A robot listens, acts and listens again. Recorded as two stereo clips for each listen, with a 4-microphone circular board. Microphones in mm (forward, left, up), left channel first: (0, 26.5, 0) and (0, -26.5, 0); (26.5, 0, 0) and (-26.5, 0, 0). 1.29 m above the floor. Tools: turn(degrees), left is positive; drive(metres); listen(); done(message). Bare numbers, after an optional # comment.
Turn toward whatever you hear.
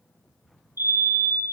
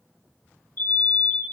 # The fire alarm: 55° right.
turn(-55)
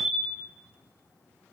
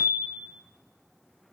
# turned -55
# The fire alarm is now 10° right.
turn(-10)
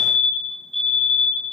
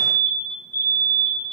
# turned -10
done("Found it: a fire alarm, straight ahead, over 4 m away.")